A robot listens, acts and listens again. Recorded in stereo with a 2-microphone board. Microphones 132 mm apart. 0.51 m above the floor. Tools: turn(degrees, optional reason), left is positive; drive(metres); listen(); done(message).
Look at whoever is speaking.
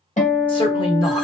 turn(degrees=40, reason="The woman speaking: about 40° left or 140° left.")
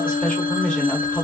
turn(degrees=10, reason="So it is at 10° left.")
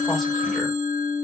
listen()
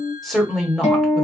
done("Found it: a woman speaking, straight ahead, 1 to 2 m away.")